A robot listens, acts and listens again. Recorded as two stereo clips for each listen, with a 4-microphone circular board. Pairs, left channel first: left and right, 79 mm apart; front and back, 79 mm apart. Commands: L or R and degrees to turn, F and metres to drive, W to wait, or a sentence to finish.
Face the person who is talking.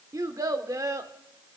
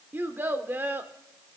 R120
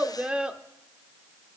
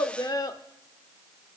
R15
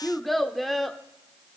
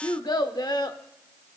Facing the child speaking, under 1 m away.